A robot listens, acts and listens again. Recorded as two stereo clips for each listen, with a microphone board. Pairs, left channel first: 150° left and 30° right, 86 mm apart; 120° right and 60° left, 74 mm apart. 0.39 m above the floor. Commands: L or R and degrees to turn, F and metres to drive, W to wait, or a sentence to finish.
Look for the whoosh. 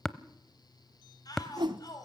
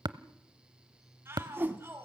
Facing the whoosh.